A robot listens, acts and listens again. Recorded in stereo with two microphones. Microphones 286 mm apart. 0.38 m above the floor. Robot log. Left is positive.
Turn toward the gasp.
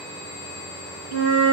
cmd idle
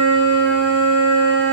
cmd idle
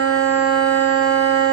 end: I can't make out a gasp to turn to.